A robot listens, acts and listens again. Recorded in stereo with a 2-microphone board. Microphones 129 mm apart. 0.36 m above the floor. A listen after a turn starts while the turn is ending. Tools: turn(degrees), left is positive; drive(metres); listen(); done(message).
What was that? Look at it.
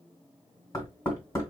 turn(degrees=30)
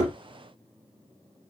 done("Facing the knocking, 2 to 4 m away.")